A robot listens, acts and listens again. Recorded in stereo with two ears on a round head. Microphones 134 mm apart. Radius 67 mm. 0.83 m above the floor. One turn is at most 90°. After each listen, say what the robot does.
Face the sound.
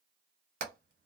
Turn 60° right.
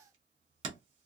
Turn 45° right.
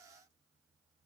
Keep listening.
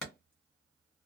Facing the hammering, 1 to 2 m away.